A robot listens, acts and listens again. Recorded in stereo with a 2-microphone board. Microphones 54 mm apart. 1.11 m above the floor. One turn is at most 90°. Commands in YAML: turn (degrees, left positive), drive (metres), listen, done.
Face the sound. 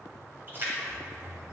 turn: -40
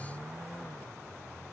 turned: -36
listen: true
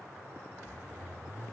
done: "I heard a splash, but can't make it out now. It was about straight ahead or 105° right."